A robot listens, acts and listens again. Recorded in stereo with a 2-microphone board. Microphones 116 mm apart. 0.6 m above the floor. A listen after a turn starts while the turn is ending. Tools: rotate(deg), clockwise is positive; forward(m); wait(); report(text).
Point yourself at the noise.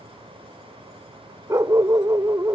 rotate(30)
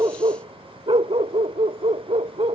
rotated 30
rotate(120)
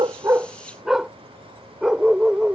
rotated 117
report("Found it: a dog barking, straight ahead.")